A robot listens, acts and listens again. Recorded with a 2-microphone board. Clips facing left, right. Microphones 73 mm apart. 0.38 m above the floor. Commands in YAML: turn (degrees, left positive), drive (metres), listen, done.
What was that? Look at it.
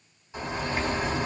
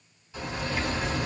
turn: 30
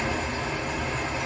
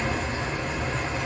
done: "Facing the bird, 1 to 2 m away."